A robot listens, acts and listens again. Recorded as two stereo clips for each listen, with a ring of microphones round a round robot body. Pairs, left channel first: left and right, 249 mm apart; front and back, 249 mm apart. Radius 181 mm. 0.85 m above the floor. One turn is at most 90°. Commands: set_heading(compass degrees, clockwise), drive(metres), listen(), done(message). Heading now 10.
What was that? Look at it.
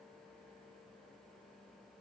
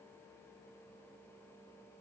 listen()
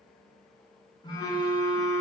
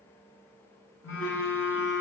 set_heading(350)
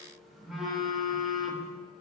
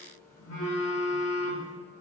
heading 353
done("Found it: a phone buzzing, straight ahead.")